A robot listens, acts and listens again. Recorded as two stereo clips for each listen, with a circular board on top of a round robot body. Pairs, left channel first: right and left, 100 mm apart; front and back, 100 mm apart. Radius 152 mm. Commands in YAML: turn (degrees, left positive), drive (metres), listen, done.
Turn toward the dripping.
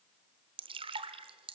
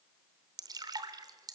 turn: 125
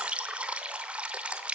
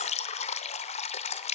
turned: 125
turn: 10
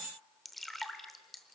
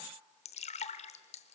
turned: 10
done: "Facing the dripping, under 1 m away."